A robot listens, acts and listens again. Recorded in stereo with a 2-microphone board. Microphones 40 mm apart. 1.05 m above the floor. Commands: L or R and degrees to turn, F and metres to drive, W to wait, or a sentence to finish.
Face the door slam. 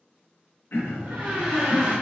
R75
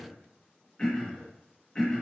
W
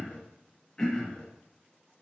I heard a door slam, but can't make it out now. It was about straight ahead or 30° right.